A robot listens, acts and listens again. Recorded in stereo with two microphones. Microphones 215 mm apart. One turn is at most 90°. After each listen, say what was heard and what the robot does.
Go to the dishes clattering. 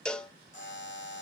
Keep listening.
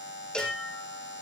Turn 90° left.
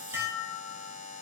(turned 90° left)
So it is at 10° right. Turn 10° right.
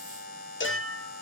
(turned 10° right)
Drive 1.0 m forward.
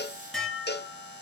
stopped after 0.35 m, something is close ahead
Blocked. The dishes clattering is further on, straight ahead.